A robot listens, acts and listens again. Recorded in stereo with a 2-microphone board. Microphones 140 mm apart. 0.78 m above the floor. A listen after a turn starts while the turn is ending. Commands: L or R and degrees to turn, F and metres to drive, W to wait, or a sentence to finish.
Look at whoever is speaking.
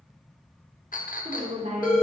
R65
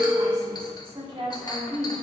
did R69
R40
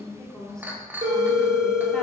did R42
Found it: a woman speaking, straight ahead, 1 to 2 m away.